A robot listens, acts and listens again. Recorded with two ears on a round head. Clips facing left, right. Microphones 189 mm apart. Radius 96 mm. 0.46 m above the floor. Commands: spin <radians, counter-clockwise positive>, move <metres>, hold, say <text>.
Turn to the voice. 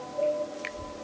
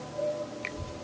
spin -0.70
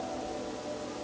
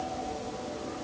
spin -0.61
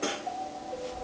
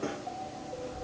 spin 0.44
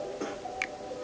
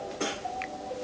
spin 0.44
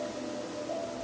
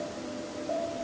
spin 0.26
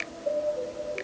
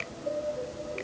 say Found it: a child speaking, straight ahead.